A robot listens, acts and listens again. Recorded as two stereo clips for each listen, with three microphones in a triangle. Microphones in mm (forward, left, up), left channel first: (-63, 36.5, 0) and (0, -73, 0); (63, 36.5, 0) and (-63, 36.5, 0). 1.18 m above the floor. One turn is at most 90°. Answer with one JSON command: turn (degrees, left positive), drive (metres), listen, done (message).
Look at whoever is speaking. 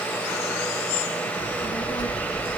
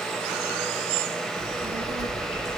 {"turn": 90}
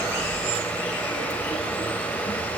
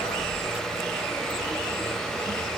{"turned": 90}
{"turn": 90}
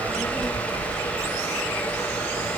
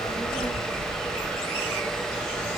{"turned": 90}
{"turn": 35}
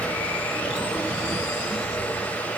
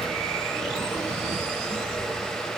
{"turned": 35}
{"listen": true}
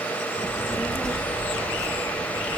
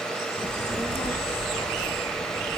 {"turn": 35}
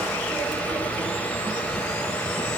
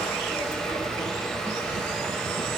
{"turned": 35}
{"listen": true}
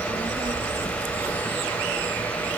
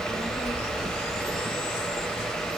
{"turn": -10}
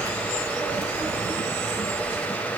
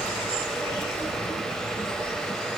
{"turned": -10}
{"listen": true}
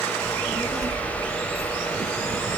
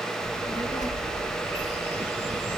{"done": "Facing the child speaking, 1 to 2 m away."}